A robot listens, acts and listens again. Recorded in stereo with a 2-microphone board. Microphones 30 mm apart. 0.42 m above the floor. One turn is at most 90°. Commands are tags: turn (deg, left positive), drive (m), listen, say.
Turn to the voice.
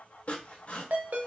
<listen/>
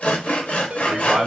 <turn deg="-50"/>
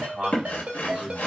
<turn deg="-10"/>
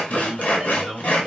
<say>Found it: a man speaking, straight ahead.</say>